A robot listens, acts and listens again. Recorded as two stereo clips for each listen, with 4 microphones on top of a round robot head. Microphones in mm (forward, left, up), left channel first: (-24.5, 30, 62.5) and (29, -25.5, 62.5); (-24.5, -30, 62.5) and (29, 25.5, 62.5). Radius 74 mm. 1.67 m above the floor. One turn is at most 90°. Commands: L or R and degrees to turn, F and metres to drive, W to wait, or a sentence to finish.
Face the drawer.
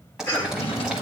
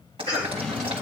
L90
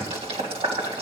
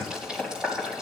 L40
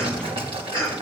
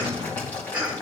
W
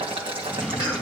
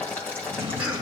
L30
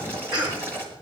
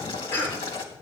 W
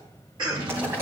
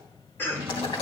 R10
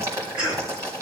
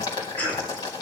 W
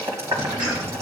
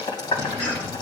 W
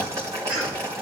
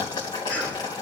Facing where the drawer came from. I can't hear it now.